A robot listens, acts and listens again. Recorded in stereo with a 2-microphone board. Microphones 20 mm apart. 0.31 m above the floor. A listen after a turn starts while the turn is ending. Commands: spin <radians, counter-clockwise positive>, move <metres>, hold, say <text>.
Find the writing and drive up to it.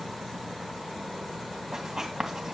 spin -0.44
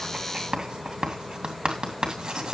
spin -2.18
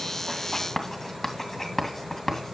spin 0.26
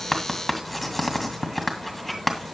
move 1.0
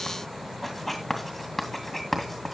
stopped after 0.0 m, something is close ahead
say Something is in my way. I am facing the writing but have not reached it.